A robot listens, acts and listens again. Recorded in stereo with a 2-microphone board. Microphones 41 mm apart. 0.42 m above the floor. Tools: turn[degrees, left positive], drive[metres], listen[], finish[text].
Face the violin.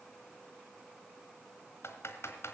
Action: listen[]
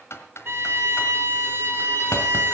Thought: The violin: about 60° right or 120° right.
Action: turn[-60]
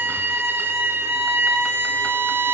Thought: So it is at 60° right.
Action: turn[-60]
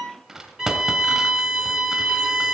Thought: The violin is now 10° right.
Action: turn[-10]
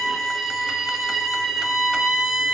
Action: finish[Found it: a violin, straight ahead, 2 to 4 m away.]